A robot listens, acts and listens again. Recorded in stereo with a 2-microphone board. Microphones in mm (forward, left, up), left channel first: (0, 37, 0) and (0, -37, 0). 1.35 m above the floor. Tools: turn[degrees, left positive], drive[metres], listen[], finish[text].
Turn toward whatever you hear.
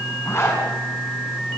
Thought: The zipper: about 35° left or 145° left.
Action: turn[35]
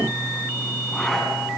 Action: finish[Found it: a zipper, straight ahead.]